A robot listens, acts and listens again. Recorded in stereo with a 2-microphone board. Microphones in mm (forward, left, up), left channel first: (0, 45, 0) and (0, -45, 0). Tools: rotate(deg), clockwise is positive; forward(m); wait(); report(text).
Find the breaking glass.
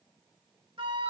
wait()
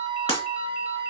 rotate(-90)
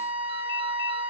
report("Facing where the breaking glass came from. I can't hear it now.")